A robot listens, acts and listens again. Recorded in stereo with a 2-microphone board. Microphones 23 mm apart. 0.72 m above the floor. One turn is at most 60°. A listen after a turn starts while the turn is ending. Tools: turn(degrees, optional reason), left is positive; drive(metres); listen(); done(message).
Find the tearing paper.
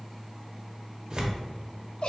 turn(degrees=-35, reason="The tearing paper: about 35° right or 145° right.")
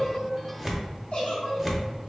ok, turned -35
done("Found it: tearing paper, straight ahead.")